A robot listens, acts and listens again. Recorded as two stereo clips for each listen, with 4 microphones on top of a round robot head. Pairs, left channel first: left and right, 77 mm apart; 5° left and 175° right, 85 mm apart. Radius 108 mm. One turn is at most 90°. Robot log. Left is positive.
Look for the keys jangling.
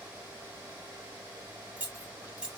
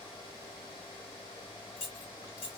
note: The keys jangling: 15° right.
cmd yaw -15
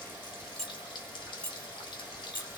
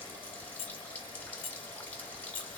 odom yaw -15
note: The keys jangling is now 25° left.
cmd yaw +25
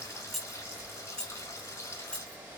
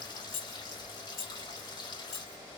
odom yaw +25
note: The keys jangling is now 15° left.
cmd yaw +15
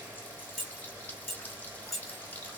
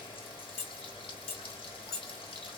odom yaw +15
end: Found it: keys jangling, straight ahead, 1 to 2 m away.